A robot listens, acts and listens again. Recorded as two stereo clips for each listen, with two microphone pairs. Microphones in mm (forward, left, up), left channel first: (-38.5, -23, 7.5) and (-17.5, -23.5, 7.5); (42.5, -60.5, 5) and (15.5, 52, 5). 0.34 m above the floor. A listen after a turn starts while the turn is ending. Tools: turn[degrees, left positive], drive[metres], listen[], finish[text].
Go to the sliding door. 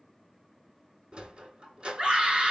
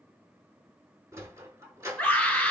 Thought: The sliding door: 35° left.
Action: turn[35]
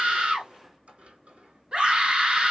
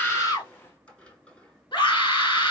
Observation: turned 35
Action: drive[1.0]
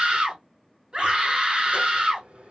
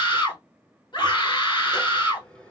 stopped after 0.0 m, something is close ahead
Action: finish[Something is in my way. I am facing the sliding door but have not reached it.]